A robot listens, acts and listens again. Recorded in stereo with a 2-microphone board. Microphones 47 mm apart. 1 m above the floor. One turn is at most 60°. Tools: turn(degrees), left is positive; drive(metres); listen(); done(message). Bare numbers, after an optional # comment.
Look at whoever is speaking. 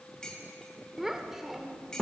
turn(-30)
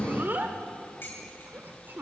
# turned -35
# So it is at 135° right.
turn(-60)
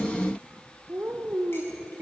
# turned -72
# The child speaking is now 65° right.
turn(-60)
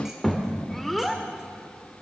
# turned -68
done("Facing the child speaking.")